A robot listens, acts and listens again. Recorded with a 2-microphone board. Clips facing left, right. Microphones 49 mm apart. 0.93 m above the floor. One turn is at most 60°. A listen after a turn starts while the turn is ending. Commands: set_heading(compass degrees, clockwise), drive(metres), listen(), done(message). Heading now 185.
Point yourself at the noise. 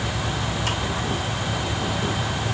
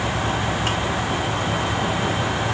listen()
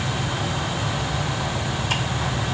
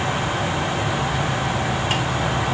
listen()
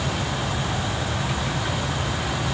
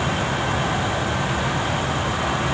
done("I can't make out anything to turn to.")